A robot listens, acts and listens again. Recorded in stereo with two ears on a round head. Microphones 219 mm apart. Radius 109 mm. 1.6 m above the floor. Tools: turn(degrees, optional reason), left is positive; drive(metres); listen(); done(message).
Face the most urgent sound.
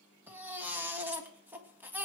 turn(degrees=-30)
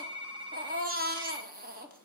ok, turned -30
turn(degrees=-140, reason="So it is at 140° right.")
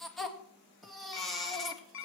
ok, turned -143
done("Found it: a baby crying, straight ahead.")